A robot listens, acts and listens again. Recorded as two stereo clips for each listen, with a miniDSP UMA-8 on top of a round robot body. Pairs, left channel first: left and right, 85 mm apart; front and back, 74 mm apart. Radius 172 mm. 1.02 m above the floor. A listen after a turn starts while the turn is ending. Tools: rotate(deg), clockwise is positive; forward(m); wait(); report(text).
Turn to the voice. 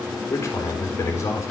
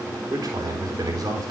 rotate(-145)
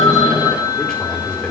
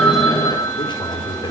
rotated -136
rotate(-10)
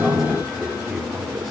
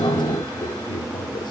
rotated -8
report("Found it: a man speaking, straight ahead, over 4 m away.")